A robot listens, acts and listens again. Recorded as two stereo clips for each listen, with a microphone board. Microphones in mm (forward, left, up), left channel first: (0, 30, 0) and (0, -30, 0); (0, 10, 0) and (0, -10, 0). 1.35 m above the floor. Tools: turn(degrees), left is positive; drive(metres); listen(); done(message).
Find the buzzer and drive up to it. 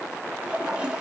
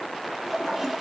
listen()
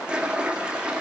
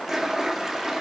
listen()
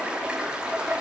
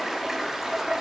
done("I can't make out a buzzer to turn to.")